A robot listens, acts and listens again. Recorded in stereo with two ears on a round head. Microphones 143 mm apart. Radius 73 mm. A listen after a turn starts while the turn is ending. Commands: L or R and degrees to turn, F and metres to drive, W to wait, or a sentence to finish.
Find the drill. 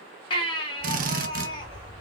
R55
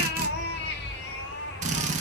W
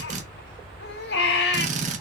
R50
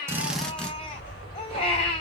W
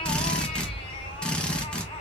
W
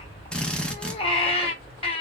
Found it: a drill, straight ahead.